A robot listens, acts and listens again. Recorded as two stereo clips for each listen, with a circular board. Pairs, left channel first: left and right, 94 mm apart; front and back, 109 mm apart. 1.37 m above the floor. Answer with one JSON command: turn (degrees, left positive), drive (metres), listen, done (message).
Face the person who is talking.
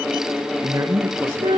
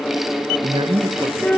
{"turn": -145}
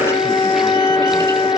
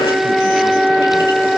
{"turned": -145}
{"listen": true}
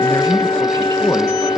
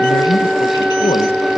{"turn": 30}
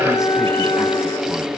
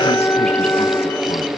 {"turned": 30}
{"listen": true}
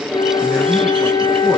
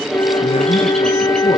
{"listen": true}
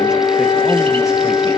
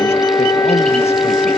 {"done": "Facing where the man speaking came from. I can't hear it now."}